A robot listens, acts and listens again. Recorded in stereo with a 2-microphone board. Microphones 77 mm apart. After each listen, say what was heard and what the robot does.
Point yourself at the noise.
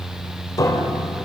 The piano: about 50° left or 130° left. Turn 50° left.
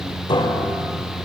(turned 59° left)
So it is at 70° left. Turn 70° left.
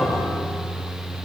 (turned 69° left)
Facing the piano.